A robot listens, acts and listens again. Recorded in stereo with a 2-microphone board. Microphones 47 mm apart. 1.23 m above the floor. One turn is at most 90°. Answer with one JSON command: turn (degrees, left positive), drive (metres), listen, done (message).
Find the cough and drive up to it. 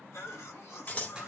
{"turn": 70}
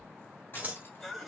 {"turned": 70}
{"drive": 1.0}
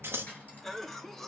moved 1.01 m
{"turn": 10}
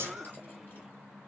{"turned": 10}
{"drive": 1.0}
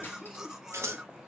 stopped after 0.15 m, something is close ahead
{"turn": -10}
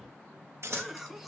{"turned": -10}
{"done": "Arrived at the cough, straight ahead."}